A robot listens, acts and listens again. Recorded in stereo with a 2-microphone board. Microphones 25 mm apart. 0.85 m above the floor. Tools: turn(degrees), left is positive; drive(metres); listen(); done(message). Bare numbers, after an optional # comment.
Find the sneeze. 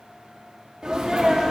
# The sneeze: about 35° right or 145° right.
turn(-35)
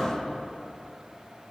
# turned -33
listen()
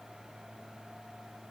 done("I heard a sneeze, but can't make it out now. It was about straight ahead or 115° right.")